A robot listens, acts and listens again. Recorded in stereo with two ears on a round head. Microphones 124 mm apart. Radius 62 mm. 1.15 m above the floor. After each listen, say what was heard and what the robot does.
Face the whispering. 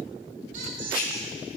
The whispering: about 65° left or 115° left. Turn 65° left.
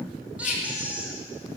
So it is at 50° left. Turn 50° left.
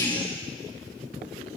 Keep listening.
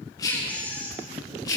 The whispering is now 25° left. Turn 25° left.
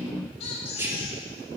The whispering is now 15° right. Turn 15° right.
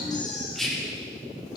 Facing the whispering.